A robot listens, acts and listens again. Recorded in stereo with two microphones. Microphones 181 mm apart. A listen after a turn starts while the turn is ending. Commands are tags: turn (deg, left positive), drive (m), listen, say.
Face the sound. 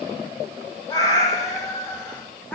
<turn deg="30"/>
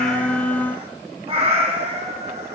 <turn deg="-40"/>
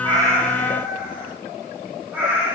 <turn deg="-10"/>
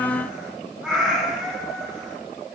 <say>Facing the cat meowing, 2 to 4 m away.</say>